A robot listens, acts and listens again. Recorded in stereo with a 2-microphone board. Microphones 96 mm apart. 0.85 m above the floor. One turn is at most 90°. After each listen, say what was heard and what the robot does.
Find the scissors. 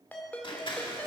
The scissors: about 60° left or 120° left. Turn 60° left.
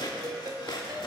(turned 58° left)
So it is at 55° left. Turn 55° left.
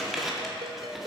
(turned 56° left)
Facing the scissors.